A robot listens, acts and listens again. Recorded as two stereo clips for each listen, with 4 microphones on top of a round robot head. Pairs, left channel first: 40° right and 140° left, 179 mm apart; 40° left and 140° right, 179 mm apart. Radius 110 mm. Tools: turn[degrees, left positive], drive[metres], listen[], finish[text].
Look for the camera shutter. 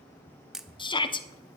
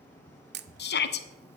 Thought: The camera shutter: 135° right.
Action: turn[-135]
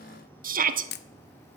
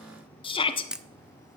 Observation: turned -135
Thought: The camera shutter is now 55° right.
Action: turn[-55]
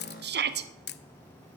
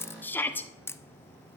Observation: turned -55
Thought: The camera shutter is now 35° right.
Action: turn[-35]
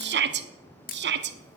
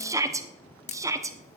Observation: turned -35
Action: finish[Facing the camera shutter.]